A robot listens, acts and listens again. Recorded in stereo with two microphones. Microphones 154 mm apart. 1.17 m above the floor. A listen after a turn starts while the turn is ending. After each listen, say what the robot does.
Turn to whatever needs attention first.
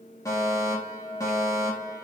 Turn 20° left.
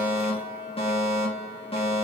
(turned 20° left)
Turn 140° left.
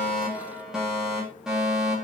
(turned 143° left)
Facing the fire alarm, over 4 m away.